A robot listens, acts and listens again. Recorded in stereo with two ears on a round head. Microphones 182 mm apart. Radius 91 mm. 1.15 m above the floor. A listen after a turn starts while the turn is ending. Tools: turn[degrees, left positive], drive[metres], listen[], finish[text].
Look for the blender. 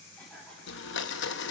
Thought: The blender: about 60° left or 120° left.
Action: turn[60]
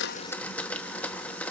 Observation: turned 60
Thought: So it is at 10° left.
Action: turn[10]
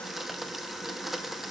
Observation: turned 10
Action: finish[Found it: a blender, straight ahead.]